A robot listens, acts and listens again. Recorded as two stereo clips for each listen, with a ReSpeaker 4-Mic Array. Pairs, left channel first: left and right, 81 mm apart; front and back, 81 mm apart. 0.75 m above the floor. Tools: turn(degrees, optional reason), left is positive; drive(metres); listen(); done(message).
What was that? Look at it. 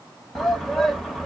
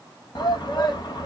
done("Facing the shout, 1 to 2 m away.")